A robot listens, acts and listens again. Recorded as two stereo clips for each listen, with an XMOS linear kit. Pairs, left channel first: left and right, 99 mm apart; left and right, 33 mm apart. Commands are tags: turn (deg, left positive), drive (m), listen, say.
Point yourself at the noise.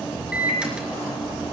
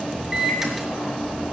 <turn deg="-30"/>
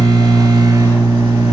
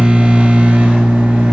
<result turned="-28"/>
<turn deg="-140"/>
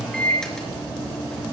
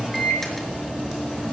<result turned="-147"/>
<say>Found it: a microwave, straight ahead.</say>